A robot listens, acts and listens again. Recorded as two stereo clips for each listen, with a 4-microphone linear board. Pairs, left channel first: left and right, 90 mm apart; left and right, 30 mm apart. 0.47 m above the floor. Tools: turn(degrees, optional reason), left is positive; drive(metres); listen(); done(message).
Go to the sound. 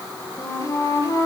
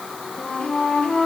turn(degrees=35, reason="The flute: about 35° left or 145° left.")
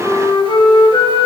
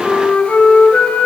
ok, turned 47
turn(degrees=95, reason="So it is at 95° left.")
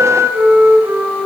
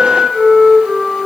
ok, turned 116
turn(degrees=-20, reason="The flute is now 20° right.")
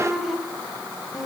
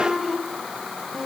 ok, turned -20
drive(metres=1.0)
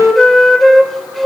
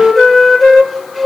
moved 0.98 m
drive(metres=1.0)
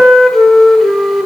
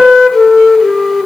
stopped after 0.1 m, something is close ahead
done("Arrived at the flute, straight ahead.")